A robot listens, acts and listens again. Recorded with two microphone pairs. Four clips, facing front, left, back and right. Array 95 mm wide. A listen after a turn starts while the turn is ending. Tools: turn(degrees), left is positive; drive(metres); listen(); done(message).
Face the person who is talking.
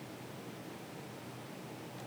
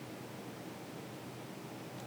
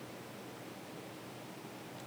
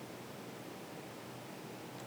listen()
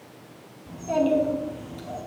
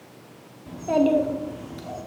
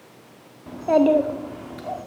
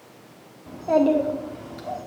turn(degrees=-160)
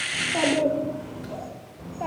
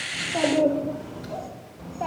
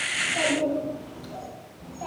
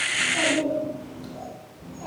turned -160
turn(degrees=45)
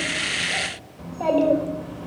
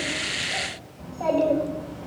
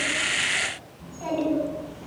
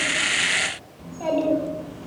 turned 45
done("Facing the child speaking, 2 to 4 m away.")